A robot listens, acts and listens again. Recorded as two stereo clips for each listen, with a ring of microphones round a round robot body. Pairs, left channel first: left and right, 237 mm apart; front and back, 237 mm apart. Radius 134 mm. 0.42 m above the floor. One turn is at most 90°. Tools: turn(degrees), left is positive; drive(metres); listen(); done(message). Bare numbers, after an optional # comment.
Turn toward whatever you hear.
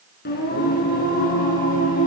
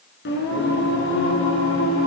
# The singing: 35° left.
turn(35)
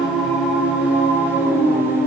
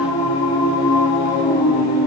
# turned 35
# The singing is now 10° right.
turn(-10)
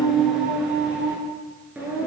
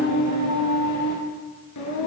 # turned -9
done("Facing the singing.")